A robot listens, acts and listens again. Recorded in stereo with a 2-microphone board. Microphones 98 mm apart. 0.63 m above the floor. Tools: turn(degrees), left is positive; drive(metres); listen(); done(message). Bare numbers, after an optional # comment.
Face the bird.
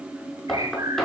# The bird: about 35° right or 145° right.
turn(-35)
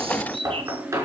# So it is at 110° right.
turn(-110)
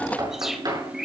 done("Found it: a bird, straight ahead.")